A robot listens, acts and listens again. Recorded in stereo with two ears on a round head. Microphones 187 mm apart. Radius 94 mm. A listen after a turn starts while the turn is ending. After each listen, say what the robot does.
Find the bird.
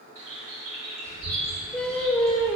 Turn 35° right.
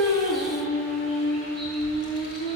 Keep listening.
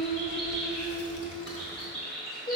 Facing the bird.